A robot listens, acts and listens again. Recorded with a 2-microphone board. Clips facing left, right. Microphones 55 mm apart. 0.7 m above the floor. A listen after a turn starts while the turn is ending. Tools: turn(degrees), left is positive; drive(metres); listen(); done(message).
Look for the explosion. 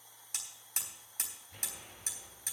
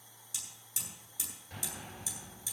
turn(degrees=-90)
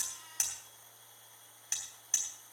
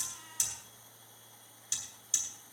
done("I heard an explosion from this way, but can't make it out now.")